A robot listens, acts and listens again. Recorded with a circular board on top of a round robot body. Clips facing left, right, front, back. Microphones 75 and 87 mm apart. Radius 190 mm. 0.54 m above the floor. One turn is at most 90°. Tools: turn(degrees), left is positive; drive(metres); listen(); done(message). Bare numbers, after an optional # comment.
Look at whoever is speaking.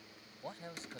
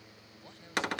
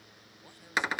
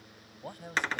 # The man speaking: 145° left.
turn(90)
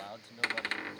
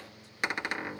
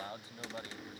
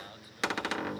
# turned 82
# The man speaking is now 60° left.
turn(60)
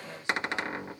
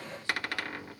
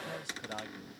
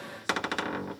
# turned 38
# Nothing new. It was at 25° left.
turn(25)
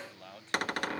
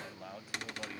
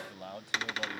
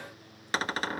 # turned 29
# The man speaking is now 10° right.
turn(-10)
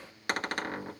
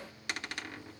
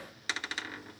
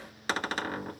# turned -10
listen()
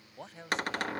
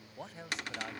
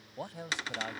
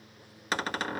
done("Facing the man speaking.")